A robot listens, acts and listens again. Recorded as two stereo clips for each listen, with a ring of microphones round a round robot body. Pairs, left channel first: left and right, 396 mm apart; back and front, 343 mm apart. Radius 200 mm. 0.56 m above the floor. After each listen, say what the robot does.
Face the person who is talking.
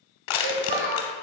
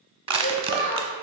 Turn 125° right.
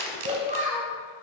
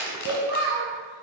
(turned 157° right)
Turn 20° right.
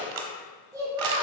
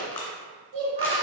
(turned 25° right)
Turn 10° right.
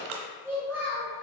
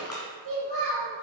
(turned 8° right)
Found it: a child speaking, straight ahead, 2 to 4 m away.